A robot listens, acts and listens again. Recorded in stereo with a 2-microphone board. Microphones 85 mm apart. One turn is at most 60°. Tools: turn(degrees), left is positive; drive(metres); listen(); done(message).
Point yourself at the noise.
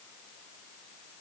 listen()
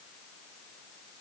listen()
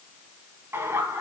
turn(degrees=-30)
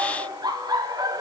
turn(degrees=-60)
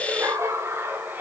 turn(degrees=-20)
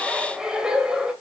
turn(degrees=-10)
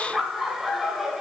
done("Found it: laughter, straight ahead, 1 to 2 m away.")